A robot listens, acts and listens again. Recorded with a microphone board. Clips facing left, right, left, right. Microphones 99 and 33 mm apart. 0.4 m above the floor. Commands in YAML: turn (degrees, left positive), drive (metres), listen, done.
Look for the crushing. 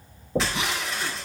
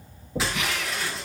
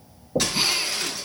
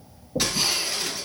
turn: -30
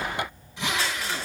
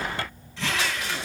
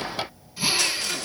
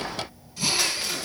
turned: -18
listen: true
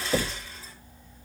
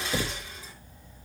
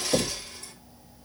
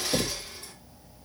turn: -160
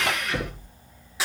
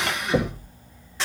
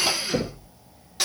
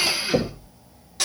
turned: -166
done: "Facing the crushing, over 4 m away."